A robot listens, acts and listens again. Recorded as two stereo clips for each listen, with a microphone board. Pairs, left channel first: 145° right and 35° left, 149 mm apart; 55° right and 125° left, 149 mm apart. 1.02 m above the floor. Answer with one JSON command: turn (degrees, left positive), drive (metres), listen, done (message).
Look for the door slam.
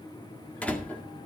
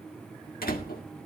{"turn": -65}
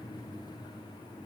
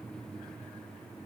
{"done": "Facing where the door slam came from. I can't hear it now."}